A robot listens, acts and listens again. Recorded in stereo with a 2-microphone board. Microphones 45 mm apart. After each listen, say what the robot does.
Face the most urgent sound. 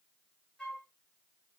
Keep listening.
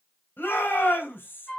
Turn 50° left.
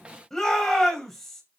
Found it: a shout, straight ahead.